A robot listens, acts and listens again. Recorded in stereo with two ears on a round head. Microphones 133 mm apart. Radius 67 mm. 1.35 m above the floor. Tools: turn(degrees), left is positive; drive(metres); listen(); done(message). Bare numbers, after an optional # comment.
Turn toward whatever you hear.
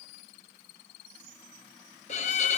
# The violin: about 50° left or 130° left.
turn(50)
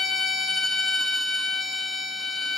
done("Facing the violin, under 1 m away.")